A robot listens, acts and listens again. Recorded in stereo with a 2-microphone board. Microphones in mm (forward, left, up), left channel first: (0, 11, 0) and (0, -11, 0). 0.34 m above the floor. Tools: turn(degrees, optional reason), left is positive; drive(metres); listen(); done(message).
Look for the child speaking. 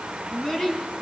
turn(degrees=25, reason="The child speaking: about 25° left or 155° left.")
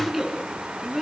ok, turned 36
done("Found it: a child speaking, straight ahead, 2 to 4 m away.")